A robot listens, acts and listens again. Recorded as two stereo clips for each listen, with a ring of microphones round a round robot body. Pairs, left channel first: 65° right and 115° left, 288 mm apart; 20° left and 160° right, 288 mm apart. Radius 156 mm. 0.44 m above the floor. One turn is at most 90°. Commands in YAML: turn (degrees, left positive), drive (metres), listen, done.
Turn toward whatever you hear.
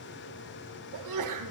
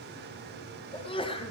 turn: 90
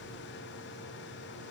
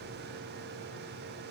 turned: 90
done: "I heard a sneeze from this way, but can't make it out now."